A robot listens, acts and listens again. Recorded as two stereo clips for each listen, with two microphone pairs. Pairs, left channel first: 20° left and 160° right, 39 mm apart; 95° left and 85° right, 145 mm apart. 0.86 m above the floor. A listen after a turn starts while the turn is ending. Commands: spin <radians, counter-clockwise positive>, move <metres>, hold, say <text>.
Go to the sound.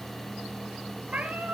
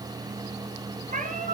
spin -1.92
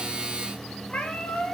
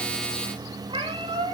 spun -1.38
spin -0.52
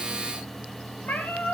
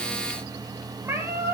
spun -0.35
spin -0.17
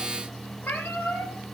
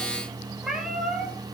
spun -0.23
move 1.0
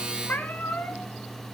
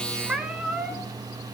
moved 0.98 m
move 1.0
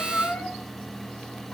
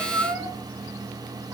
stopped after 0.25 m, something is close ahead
spin -0.26
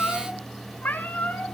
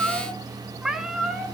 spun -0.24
say I am next to the cat meowing.